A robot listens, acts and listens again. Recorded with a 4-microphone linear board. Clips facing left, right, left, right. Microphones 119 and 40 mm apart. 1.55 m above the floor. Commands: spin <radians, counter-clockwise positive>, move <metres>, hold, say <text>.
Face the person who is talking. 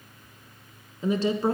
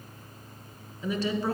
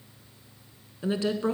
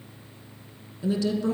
spin 0.52
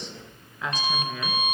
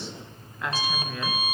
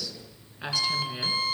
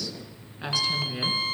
say Found it: a woman speaking, straight ahead, 1 to 2 m away.